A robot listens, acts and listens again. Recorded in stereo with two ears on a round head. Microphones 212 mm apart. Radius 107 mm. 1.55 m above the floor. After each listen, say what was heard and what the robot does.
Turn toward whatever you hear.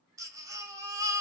Turn 30° right.
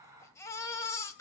So it is at 15° left. Turn 15° left.
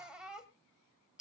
Facing the baby crying, 2 to 4 m away.